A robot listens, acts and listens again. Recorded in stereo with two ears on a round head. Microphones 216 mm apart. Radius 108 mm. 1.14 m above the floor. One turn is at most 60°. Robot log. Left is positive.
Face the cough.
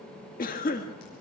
note: The cough: about 35° left or 145° left.
cmd yaw +35
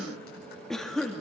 end: Facing the cough, 1 to 2 m away.